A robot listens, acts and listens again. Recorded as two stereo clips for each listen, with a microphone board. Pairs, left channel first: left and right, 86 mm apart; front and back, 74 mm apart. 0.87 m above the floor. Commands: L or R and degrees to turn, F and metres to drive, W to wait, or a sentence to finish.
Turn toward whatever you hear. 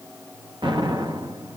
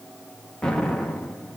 R80
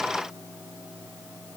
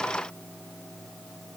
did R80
I heard an explosion from this way, but can't make it out now.